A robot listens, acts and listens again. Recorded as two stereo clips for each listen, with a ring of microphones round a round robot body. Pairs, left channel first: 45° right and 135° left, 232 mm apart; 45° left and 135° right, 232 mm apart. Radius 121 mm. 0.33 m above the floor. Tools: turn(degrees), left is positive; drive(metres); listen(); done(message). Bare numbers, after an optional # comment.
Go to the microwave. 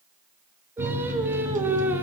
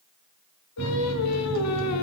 # The microwave: 170° right.
turn(-170)
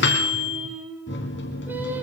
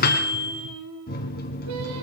drive(1.0)
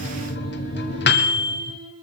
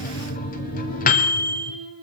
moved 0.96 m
drive(1.0)
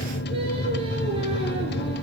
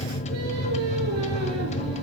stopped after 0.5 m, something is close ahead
# The microwave is now 10° right.
turn(-10)
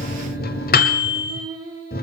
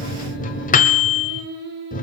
done("I am next to the microwave.")